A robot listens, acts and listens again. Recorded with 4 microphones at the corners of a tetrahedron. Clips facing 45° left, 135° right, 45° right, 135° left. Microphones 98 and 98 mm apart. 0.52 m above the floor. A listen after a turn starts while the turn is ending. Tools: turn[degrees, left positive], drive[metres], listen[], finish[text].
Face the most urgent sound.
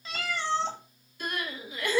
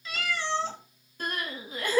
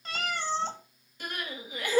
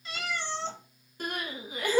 Thought: The crying: straight behind.
Action: turn[180]
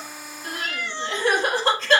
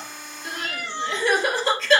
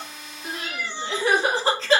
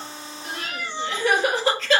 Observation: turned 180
Thought: The crying is now 10° left.
Action: turn[10]
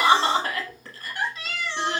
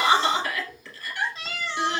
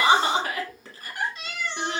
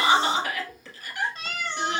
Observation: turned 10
Action: finish[Found it: crying, straight ahead.]